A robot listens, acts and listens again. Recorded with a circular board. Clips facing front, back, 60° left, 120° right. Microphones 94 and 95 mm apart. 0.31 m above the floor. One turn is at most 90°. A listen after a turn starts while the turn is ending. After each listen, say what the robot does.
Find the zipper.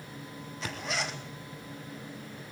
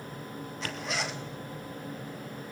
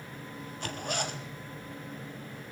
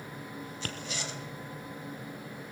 Turn 90° left.
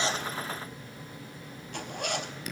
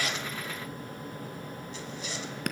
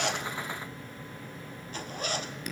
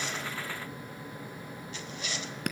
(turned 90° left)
Turn 20° left.
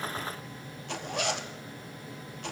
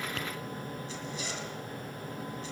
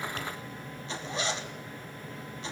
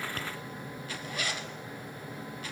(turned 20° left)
Found it: a zipper, straight ahead.